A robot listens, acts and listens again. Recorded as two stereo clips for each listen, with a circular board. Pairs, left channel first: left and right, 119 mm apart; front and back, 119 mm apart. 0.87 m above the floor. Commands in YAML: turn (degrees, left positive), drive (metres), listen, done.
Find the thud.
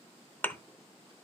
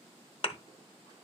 turn: 20
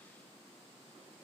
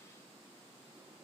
done: "I heard a thud from this way, but can't make it out now."